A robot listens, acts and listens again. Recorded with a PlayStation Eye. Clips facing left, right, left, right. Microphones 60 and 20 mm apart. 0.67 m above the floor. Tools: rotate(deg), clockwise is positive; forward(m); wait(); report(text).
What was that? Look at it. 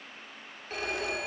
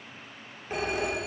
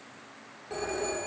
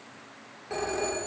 rotate(20)
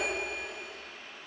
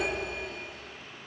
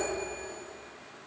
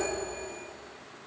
report("Facing the phone ringing.")